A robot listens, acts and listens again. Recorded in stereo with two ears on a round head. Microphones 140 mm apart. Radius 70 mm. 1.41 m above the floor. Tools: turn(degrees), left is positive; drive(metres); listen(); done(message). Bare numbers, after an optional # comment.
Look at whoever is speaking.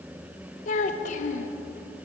# The child speaking: about 50° left or 130° left.
turn(50)
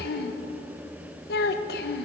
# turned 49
# So it is at 75° left.
turn(75)
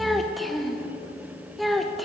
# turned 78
done("Found it: a child speaking, straight ahead, under 1 m away.")